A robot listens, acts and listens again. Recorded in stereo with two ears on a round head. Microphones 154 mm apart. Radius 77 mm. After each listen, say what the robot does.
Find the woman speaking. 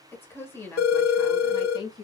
Turn 30° left.
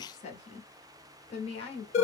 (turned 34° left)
Turn 35° left.
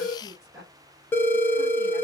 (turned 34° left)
Found it: a woman speaking, straight ahead.